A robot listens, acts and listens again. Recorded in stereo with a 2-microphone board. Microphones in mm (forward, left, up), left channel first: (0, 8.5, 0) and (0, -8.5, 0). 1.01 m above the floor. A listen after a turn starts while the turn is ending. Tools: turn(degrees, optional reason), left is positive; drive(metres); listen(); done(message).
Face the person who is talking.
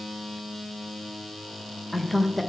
turn(degrees=-30)
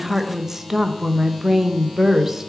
turn(degrees=-145, reason="So it is at 145° right.")
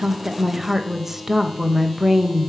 turn(degrees=-25, reason="The woman speaking is now 25° right.")
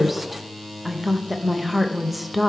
done("Facing the woman speaking, under 1 m away.")